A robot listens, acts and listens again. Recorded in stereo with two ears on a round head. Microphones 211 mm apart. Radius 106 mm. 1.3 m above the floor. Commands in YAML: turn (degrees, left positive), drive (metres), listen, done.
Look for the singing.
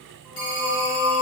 turn: 30
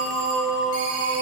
turn: -20
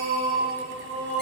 done: "Found it: singing, straight ahead."